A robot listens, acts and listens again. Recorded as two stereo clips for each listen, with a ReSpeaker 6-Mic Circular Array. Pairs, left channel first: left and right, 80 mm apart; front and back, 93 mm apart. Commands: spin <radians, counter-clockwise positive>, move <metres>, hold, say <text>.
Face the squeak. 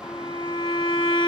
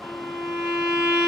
hold
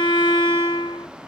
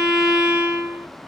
hold
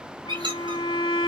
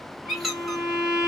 spin -1.57
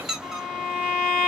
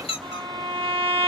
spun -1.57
say Facing the squeak.